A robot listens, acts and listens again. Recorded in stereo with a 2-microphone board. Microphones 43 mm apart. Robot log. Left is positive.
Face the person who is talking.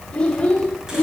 note: The child speaking: about 25° left or 155° left.
cmd yaw +25
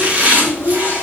note: So it is at 135° left.
cmd yaw +135
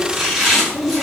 end: Facing the child speaking.